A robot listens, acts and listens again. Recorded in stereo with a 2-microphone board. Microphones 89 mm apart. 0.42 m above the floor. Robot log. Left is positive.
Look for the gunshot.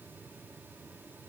cmd idle
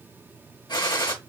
note: The gunshot: about 55° left or 125° left.
cmd yaw +55
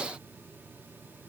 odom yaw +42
cmd idle
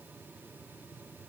end: I heard a gunshot, but can't make it out now. It was about 15° left or 80° left.